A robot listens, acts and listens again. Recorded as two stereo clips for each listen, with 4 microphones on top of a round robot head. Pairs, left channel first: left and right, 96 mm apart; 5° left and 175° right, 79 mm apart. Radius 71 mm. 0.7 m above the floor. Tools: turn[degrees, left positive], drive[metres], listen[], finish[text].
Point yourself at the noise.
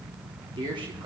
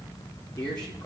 Thought: The man speaking: 65° right.
Action: turn[-65]
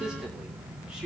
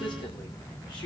Thought: The man speaking is now 10° right.
Action: turn[-10]
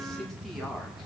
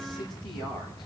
Action: listen[]
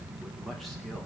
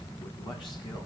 Action: listen[]
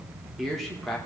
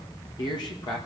Action: finish[Facing the man speaking, 2 to 4 m away.]